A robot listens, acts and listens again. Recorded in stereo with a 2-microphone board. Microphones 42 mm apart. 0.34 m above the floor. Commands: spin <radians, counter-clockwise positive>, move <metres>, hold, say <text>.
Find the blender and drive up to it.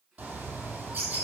hold
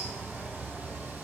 hold
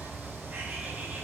say I can't make out a blender to turn to.